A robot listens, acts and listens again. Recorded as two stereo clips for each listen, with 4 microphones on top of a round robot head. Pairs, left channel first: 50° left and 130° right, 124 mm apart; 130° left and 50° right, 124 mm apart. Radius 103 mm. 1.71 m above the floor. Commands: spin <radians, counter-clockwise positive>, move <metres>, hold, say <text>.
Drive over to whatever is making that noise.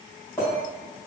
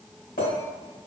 spin 2.18
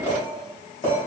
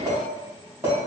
spin 0.35
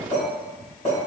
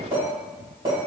move 1.0
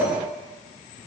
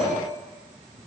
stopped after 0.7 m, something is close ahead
spin 0.17
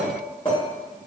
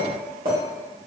say Arrived at the clink, straight ahead.